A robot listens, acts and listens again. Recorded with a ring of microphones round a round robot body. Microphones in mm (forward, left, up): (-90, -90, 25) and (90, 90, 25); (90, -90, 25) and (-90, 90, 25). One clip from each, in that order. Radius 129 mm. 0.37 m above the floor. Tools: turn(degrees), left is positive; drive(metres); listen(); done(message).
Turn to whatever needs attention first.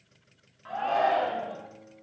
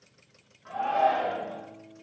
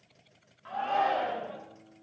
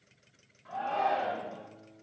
turn(degrees=-80)
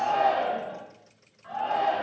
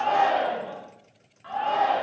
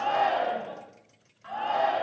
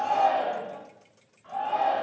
turn(degrees=-20)
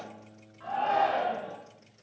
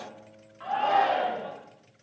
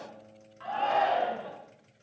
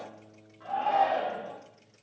done("Found it: a shout, straight ahead.")